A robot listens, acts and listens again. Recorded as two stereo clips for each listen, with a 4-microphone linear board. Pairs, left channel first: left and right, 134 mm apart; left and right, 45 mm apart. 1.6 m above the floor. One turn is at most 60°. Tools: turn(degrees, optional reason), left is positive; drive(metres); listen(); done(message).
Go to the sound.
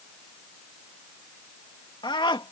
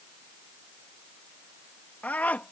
turn(degrees=40, reason="The scream: about 40° left or 140° left.")
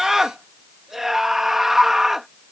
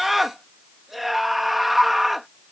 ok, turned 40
drive(metres=1.0)
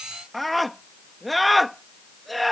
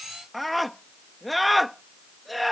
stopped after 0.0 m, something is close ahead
done("Something is in my way. I am facing the scream but have not reached it.")